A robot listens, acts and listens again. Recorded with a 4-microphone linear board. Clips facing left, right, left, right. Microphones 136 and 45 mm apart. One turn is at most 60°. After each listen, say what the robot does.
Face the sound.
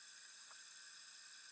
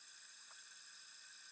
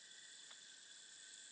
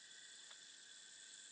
Keep listening.
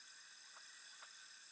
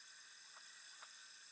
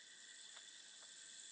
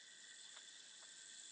Keep listening.
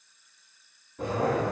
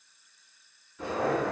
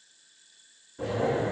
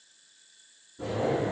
Turn 45° left.
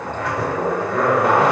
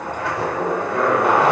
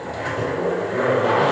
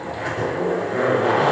Facing the zipper, under 1 m away.